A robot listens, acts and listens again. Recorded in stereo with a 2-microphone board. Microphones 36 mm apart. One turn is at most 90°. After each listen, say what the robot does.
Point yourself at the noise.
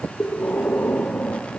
Turn 55° left.
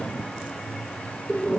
Found it: breathing, straight ahead, over 4 m away.